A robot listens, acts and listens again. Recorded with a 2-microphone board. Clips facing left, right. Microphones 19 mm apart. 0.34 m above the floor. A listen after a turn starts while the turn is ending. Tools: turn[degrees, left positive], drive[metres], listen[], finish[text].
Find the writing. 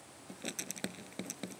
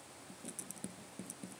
Thought: The writing: about 65° left or 115° left.
Action: turn[65]
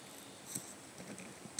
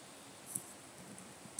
Thought: So it is at 45° left.
Action: turn[45]
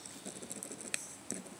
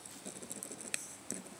Action: finish[Facing the writing.]